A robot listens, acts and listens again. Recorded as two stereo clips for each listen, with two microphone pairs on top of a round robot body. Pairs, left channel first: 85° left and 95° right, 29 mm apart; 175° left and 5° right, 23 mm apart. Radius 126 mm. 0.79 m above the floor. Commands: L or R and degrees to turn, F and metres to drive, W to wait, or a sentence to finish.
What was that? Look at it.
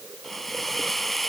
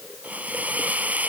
Found it: a hiss, straight ahead.